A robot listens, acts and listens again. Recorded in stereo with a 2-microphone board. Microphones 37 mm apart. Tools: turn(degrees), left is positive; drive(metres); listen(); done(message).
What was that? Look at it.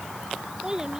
turn(degrees=-20)
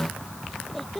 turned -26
done("Facing the child speaking.")